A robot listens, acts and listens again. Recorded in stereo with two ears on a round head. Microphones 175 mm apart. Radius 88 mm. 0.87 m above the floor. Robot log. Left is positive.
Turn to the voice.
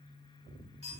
cmd idle
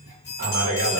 note: The man speaking: about 45° right or 135° right.
cmd yaw -45
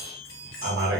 note: So it is at 85° right.
cmd yaw -85
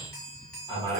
note: The man speaking is now 30° right.
cmd yaw -30
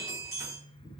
end: Facing the man speaking, 1 to 2 m away.